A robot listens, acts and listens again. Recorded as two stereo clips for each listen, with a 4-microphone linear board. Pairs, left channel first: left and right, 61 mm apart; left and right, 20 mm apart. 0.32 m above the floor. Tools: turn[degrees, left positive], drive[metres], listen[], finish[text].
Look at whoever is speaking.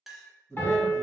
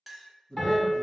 Thought: The man speaking: about 55° left or 125° left.
Action: turn[55]
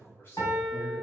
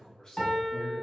Thought: So it is at 50° left.
Action: turn[50]
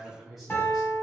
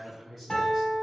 Action: finish[Found it: a man speaking, straight ahead.]